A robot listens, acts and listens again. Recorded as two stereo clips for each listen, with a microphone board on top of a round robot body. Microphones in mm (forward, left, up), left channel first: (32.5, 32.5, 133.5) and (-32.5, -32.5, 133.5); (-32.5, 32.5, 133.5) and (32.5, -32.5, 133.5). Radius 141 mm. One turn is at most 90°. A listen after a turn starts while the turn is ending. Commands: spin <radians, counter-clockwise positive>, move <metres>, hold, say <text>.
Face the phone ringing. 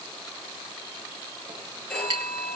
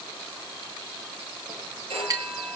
spin -0.70
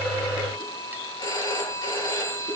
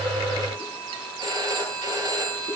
say Found it: a phone ringing, straight ahead.